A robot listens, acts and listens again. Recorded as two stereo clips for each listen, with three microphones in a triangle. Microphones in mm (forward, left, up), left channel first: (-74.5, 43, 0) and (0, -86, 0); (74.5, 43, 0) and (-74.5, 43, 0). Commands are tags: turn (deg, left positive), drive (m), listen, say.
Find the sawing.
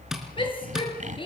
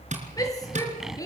<turn deg="-95"/>
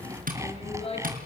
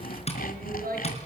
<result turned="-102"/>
<turn deg="10"/>
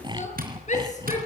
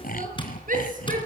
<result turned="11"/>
<say>Found it: sawing, straight ahead, 1 to 2 m away.</say>